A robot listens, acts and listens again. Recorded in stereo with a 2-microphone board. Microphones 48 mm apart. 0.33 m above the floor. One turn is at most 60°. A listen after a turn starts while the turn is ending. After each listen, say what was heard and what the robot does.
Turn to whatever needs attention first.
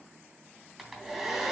Keep listening.
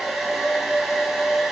Keep listening.
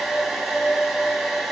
I can't make out anything urgent to turn to.